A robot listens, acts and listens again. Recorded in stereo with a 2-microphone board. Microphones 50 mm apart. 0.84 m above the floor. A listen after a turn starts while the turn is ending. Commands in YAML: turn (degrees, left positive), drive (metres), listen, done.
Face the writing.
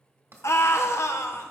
turn: -65
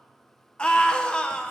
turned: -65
listen: true
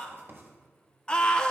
turn: -50
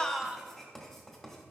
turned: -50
turn: 10
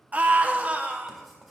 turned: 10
done: "Facing the writing, 1 to 2 m away."